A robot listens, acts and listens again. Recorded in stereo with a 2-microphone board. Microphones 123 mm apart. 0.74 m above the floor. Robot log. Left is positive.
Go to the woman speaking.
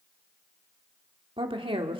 note: The woman speaking: about 45° right or 135° right.
cmd yaw -45
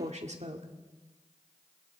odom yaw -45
note: So it is at 85° right.
cmd yaw -85
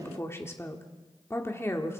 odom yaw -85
note: The woman speaking is now 20° left.
cmd yaw +20
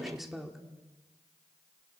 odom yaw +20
cmd fwd 1.0
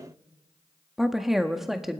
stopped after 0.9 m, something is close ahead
end: I am next to the woman speaking.